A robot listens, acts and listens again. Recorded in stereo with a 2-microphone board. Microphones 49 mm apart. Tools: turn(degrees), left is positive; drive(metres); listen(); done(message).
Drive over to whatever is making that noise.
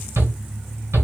turn(degrees=-70)
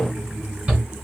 turn(degrees=-25)
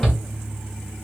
turn(degrees=10)
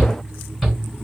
drive(metres=1.0)
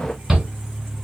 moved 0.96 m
drive(metres=1.0)
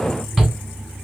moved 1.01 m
drive(metres=1.0)
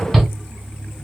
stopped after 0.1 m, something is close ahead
done("Arrived at the shout, straight ahead.")